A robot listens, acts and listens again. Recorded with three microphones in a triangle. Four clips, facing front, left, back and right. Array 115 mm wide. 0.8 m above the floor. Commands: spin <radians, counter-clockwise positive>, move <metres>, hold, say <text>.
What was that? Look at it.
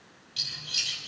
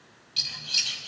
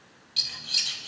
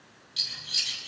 spin 2.18
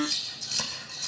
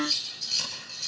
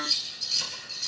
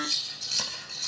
spin -0.52
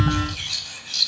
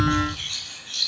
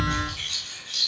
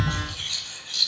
say Facing the scissors.